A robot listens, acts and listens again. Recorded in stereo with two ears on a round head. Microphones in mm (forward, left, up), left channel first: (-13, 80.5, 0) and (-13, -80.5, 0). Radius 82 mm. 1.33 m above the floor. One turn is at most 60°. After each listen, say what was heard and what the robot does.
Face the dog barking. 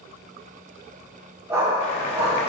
The dog barking: about 15° right or 165° right. Turn 15° right.
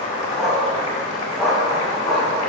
Turn 30° left.
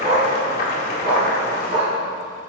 So it is at 25° right. Turn 25° right.
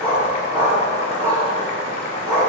The dog barking is now 15° right. Turn 15° right.
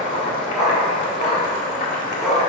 Found it: a dog barking, straight ahead, over 4 m away.